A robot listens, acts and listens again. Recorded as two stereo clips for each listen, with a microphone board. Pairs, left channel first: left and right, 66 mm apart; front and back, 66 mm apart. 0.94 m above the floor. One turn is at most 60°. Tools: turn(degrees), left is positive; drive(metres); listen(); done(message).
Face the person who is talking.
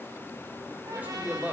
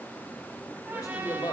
turn(degrees=-25)
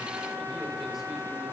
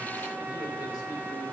listen()
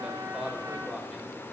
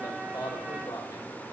done("Facing the man speaking, 2 to 4 m away.")